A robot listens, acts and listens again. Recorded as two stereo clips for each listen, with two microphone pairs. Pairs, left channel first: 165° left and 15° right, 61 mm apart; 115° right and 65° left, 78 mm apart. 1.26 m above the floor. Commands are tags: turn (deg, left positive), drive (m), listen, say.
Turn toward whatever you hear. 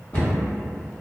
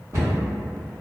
<turn deg="110"/>
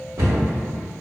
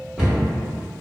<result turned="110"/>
<turn deg="-15"/>
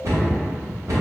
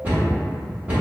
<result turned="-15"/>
<say>Found it: a cupboard door, straight ahead.</say>